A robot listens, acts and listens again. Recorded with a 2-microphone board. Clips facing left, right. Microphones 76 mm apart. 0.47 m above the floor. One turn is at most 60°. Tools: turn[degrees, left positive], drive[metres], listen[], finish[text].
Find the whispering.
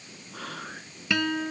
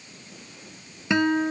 Thought: The whispering: about 70° left or 110° left.
Action: turn[60]
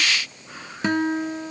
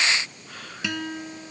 Thought: So it is at 10° left.
Action: turn[10]
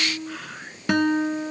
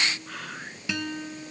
Action: finish[Facing the whispering.]